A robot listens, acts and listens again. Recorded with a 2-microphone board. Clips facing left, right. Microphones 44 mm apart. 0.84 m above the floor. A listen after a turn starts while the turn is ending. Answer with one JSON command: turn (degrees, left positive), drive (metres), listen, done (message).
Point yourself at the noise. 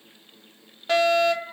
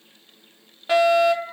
{"turn": -30}
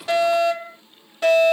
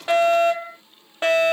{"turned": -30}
{"turn": -140}
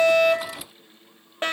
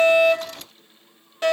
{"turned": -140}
{"turn": 40}
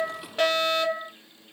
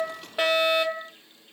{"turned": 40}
{"turn": -15}
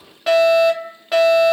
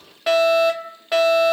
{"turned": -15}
{"done": "Found it: a fire alarm, straight ahead."}